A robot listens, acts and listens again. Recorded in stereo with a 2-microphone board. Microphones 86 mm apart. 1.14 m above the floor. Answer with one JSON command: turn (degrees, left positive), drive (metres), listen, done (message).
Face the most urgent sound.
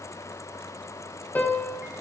{"listen": true}
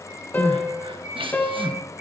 {"turn": -90}
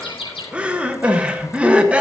{"turn": -15}
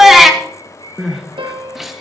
{"done": "Facing the crying, 1 to 2 m away."}